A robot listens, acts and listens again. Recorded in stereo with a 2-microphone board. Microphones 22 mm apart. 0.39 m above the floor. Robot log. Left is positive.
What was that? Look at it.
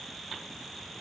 cmd idle
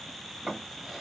note: The drawer: about 30° right or 150° right.
cmd yaw -30
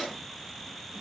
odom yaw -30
end: Facing the drawer.